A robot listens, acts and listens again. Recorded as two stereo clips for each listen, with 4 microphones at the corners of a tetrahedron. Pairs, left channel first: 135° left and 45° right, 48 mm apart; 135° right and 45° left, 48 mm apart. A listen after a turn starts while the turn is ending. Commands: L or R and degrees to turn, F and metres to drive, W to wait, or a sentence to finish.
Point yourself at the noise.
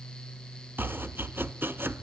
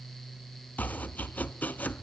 R80
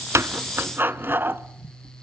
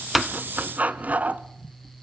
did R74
R10
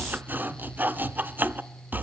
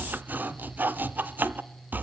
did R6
Found it: chopping, straight ahead.